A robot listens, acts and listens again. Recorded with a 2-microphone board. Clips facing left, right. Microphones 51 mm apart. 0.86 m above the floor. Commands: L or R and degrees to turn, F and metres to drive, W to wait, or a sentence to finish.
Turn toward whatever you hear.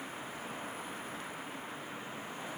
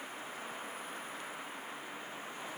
W
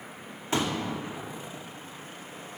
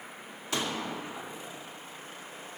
L25
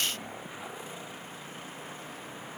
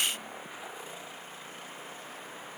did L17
W
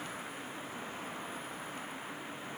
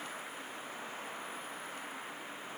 I heard a pop, but can't make it out now. It was about 10° left or 135° left.